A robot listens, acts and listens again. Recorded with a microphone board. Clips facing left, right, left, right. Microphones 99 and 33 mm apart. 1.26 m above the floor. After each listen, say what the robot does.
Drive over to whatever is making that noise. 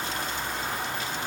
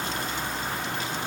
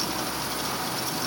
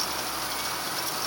Keep listening.
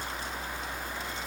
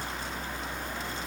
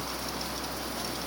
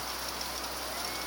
Keep listening.
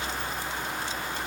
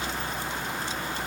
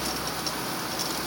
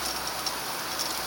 I can't make out anything to turn to.